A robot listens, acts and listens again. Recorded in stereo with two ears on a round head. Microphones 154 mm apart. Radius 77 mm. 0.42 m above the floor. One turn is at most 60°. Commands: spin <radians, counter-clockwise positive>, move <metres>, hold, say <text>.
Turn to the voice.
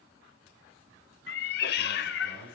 spin -1.05
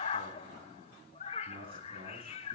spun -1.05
spin -0.52
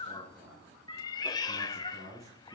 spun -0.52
spin -0.26
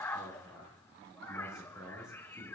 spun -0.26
say Found it: a man speaking, straight ahead.